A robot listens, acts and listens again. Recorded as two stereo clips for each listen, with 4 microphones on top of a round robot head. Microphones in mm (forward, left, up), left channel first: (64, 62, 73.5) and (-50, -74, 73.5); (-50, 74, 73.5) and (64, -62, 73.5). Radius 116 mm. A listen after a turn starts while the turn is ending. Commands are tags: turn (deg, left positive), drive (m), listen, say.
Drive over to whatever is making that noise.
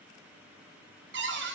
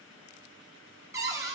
<turn deg="-125"/>
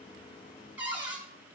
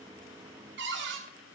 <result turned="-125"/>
<turn deg="-50"/>
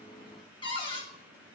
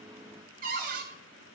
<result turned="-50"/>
<turn deg="-10"/>
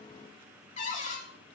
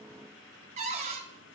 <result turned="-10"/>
<drive m="1.0"/>
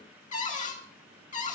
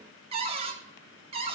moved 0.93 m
<drive m="1.0"/>
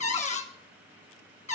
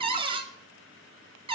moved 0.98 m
<drive m="1.0"/>
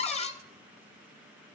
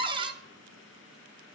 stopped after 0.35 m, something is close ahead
<say>Arrived at the cupboard door, straight ahead.</say>